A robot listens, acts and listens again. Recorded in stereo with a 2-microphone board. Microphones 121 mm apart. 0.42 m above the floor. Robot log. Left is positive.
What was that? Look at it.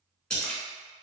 cmd yaw +30
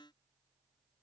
cmd idle
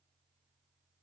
end: I heard a splash, but can't make it out now. It was about 25° right or 145° left.